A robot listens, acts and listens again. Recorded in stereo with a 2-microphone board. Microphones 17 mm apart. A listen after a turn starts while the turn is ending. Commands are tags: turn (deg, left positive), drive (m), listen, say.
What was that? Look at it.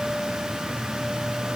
<listen/>
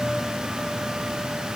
<listen/>
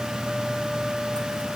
<say>I can't make out anything.</say>